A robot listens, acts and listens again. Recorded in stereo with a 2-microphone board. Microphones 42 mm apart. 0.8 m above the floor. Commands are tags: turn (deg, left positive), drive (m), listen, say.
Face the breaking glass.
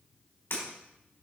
<turn deg="90"/>
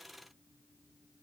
<say>Facing where the breaking glass came from. I can't hear it now.</say>